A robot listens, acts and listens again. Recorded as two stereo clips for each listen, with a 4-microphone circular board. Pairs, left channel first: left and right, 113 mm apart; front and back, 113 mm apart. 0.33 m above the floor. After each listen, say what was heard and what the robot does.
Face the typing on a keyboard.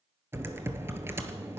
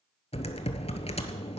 The typing on a keyboard: 25° right. Turn 25° right.
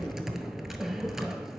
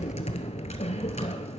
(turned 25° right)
Facing the typing on a keyboard, 1 to 2 m away.